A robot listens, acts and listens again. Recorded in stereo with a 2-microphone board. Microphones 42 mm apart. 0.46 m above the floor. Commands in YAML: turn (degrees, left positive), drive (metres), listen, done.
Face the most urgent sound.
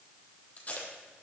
listen: true
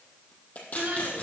turn: -55
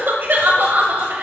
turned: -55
turn: -65
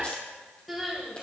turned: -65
done: "Found it: crying, straight ahead."